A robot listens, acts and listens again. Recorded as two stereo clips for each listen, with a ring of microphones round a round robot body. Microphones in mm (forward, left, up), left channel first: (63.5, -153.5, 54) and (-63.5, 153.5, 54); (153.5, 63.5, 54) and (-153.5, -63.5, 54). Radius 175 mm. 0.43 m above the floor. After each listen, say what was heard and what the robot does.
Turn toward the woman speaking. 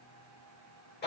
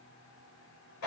Keep listening.
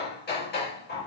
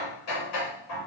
Keep listening.
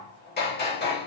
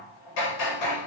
I can't make out a woman speaking to turn to.